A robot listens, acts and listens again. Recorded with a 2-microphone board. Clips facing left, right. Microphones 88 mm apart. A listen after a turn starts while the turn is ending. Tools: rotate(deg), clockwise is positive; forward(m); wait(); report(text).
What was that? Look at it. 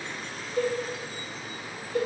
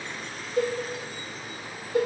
rotate(20)
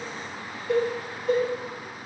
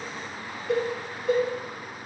report("Found it: a cowbell, straight ahead.")